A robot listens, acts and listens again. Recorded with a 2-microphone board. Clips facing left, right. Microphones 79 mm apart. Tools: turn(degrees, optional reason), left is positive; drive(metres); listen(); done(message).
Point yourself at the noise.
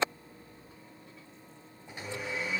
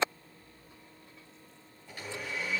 turn(degrees=25, reason="The blender: about 25° left or 155° left.")
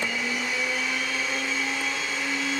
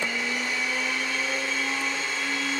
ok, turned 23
done("Facing the blender, 2 to 4 m away.")